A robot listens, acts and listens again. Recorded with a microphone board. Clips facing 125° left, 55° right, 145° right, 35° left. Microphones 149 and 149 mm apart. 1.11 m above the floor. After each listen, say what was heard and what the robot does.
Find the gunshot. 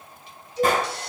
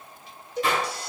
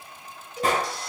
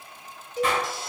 The gunshot: 165° left. Turn 165° left.
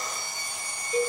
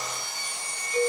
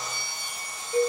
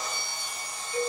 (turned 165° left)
Facing where the gunshot came from. I can't hear it now.